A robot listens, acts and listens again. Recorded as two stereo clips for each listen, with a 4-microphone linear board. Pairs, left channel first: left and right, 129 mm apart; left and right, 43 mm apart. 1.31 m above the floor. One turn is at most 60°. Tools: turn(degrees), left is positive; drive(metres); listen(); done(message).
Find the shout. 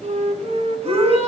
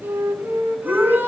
turn(degrees=-55)
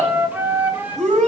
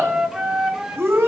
turn(degrees=-60)
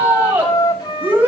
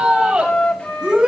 turn(degrees=-15)
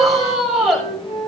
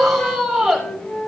done("Facing the shout, over 4 m away.")